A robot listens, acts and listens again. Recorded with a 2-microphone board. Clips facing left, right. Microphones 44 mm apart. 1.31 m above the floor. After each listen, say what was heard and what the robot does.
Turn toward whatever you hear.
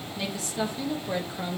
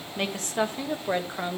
The woman speaking: about 25° right or 155° right. Turn 25° right.
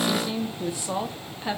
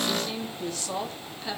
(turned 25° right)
So it is at 30° left. Turn 30° left.
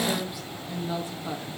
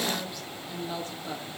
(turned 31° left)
The woman speaking is now 20° left. Turn 20° left.
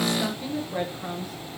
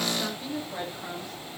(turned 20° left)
The woman speaking is now 15° left. Turn 15° left.
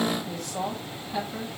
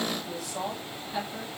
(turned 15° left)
Facing the woman speaking, 2 to 4 m away.